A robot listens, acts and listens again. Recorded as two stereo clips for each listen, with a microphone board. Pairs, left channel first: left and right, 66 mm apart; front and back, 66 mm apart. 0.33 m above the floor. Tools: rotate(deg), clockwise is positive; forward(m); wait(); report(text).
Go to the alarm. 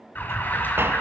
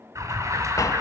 rotate(-150)
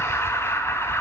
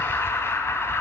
rotate(-45)
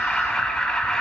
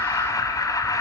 rotate(-15)
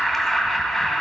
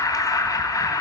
forward(1.0)
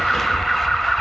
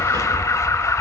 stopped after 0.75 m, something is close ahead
report("I am next to the alarm.")